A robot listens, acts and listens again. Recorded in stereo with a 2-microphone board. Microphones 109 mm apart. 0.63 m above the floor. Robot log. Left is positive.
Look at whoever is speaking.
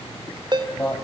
note: The man speaking: about 20° left or 160° left.
cmd yaw +20
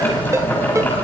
cmd idle
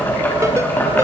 cmd idle
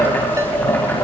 end: I heard a man speaking, but can't make it out now. It was about straight ahead or 140° left.